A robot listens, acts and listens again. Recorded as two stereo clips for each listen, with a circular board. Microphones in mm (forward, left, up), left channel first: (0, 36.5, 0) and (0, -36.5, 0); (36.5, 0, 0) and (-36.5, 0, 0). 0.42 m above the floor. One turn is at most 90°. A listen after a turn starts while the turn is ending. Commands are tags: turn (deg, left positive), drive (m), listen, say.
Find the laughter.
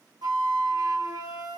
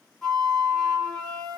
<listen/>
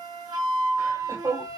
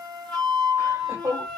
<turn deg="-90"/>
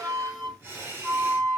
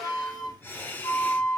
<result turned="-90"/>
<turn deg="-50"/>
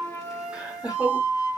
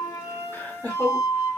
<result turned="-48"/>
<turn deg="-50"/>
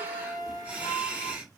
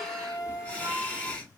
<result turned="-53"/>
<turn deg="-45"/>
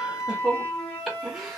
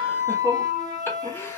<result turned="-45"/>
<say>Facing the laughter.</say>